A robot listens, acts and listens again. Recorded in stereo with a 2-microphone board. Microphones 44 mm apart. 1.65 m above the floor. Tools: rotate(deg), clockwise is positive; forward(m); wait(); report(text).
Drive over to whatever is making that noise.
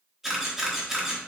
rotate(30)
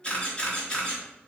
rotate(-25)
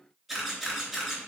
forward(1.0)
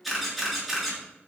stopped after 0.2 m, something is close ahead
report("Blocked. The camera shutter is further on, straight ahead.")